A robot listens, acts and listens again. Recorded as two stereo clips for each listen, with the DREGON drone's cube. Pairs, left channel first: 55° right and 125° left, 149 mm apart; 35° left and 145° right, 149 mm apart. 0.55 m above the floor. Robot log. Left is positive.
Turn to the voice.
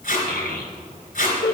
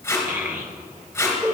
note: The child speaking: 70° right.
cmd yaw -70
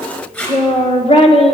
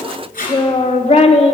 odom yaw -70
note: The child speaking is now 10° right.
cmd yaw -10
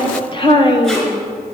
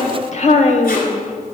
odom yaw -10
end: Facing the child speaking.